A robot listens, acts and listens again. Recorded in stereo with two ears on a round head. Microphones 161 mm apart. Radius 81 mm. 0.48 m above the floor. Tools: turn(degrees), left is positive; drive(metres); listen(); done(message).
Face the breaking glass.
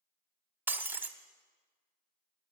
turn(degrees=-30)
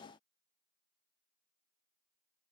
listen()
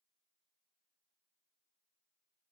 done("I heard breaking glass, but can't make it out now. It was about 20° left or 140° right.")